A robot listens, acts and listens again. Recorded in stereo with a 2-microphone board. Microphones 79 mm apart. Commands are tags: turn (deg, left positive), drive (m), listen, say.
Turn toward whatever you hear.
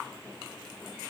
<listen/>
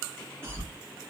<turn deg="-30"/>
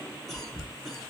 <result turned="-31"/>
<say>Facing the cough, 1 to 2 m away.</say>